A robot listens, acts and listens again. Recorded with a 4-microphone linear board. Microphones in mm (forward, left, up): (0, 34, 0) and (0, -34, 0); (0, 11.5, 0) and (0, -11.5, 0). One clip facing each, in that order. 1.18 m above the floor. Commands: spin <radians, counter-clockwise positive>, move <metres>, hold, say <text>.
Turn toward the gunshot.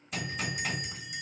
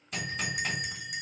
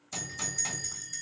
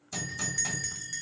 spin 0.52
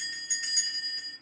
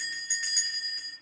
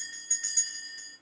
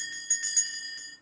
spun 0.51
hold
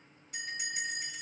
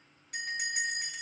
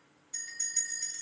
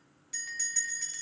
say I heard a gunshot, but can't make it out now. It was about 30° right or 150° left.